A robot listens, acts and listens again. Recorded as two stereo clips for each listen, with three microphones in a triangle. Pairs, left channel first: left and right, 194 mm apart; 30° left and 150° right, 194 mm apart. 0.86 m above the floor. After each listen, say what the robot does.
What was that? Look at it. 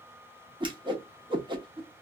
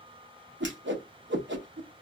Turn 155° right.
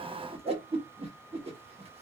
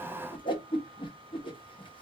Turn 35° right.
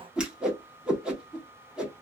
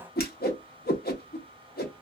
Found it: a whoosh, straight ahead, 1 to 2 m away.